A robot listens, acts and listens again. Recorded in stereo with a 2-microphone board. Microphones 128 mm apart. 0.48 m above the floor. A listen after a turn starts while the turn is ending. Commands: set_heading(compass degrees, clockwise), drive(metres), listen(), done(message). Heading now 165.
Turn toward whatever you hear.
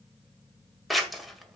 set_heading(135)
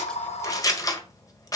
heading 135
set_heading(345)
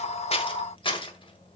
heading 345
set_heading(300)
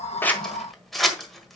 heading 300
done("Found it: scissors, straight ahead.")